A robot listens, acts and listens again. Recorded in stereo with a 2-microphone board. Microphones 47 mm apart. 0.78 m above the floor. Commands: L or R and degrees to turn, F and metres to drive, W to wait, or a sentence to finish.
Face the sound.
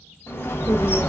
L55
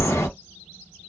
L65
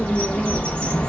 L20
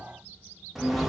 Found it: a bird, straight ahead.